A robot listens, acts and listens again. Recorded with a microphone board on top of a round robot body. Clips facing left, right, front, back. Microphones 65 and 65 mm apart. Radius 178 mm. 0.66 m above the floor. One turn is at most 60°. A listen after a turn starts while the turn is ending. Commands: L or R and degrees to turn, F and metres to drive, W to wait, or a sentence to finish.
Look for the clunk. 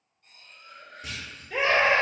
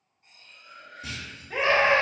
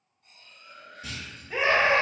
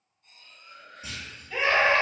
R60
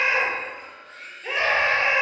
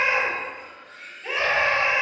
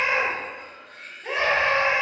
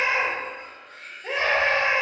R50
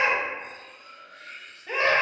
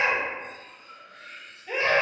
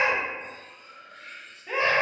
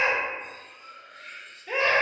I heard a clunk from this way, but can't make it out now.